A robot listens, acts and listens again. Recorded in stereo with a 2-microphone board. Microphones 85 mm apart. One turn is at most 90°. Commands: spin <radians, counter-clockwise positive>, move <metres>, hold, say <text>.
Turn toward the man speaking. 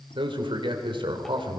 spin -1.57
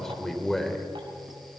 say Facing the man speaking, 2 to 4 m away.